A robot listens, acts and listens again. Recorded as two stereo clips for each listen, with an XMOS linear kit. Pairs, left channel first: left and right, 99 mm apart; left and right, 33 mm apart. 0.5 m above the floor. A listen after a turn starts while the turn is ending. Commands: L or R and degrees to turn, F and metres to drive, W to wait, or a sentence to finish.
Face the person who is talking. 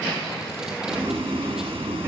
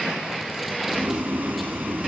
W
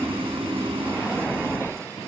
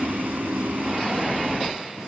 W
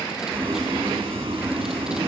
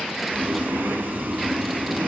I can't make out anyone speaking, only boiling.